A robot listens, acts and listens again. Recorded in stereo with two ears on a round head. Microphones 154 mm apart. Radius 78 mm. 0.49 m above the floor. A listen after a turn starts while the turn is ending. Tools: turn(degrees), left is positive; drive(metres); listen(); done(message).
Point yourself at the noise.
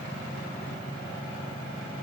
listen()
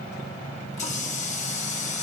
turn(degrees=40)
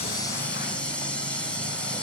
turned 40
done("Facing the running tap.")